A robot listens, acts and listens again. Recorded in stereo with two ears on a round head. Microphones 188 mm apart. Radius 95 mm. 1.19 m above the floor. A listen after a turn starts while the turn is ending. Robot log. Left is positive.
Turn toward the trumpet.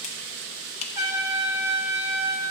note: The trumpet: about 20° right or 160° right.
cmd yaw -20
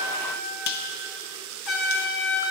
end: Facing the trumpet.